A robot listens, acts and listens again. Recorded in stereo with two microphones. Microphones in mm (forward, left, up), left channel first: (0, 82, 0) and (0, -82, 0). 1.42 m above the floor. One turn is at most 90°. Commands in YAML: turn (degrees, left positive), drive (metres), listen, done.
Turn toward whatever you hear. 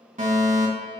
turn: -50
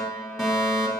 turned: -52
done: "Found it: a fire alarm, straight ahead, 2 to 4 m away."